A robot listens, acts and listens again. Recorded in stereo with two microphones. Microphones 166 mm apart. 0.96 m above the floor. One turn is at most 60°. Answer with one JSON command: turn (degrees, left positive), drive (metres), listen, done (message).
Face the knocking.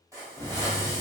{"turn": 25}
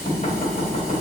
{"turn": 60}
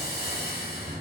{"turn": 60}
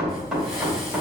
{"done": "Facing the knocking, 1 to 2 m away."}